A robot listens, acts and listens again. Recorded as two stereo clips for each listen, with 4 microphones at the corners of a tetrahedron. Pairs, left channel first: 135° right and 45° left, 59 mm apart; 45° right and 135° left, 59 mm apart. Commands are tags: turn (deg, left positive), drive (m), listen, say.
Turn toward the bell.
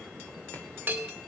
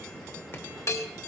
<turn deg="-20"/>
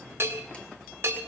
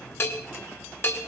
<say>Found it: a bell, straight ahead.</say>